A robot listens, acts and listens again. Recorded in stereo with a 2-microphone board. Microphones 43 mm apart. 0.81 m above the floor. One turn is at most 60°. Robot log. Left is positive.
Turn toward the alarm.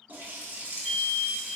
cmd yaw +30
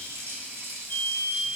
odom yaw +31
note: So it is at 140° left.
cmd yaw +60
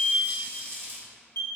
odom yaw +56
note: The alarm is now 80° left.
cmd yaw +60
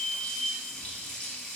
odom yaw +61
note: The alarm is now 20° left.
cmd yaw +20
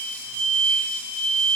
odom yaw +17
end: Facing the alarm, 1 to 2 m away.